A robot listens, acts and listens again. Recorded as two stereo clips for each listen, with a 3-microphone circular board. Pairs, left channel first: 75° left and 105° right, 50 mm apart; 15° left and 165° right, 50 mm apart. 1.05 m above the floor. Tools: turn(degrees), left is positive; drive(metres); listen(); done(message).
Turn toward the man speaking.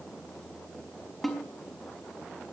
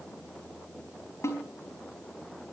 listen()
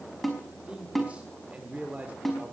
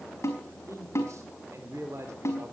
turn(degrees=-160)
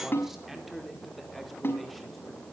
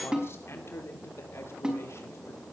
turn(degrees=-15)
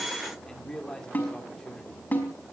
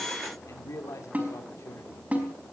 done("Found it: a man speaking, straight ahead, 2 to 4 m away.")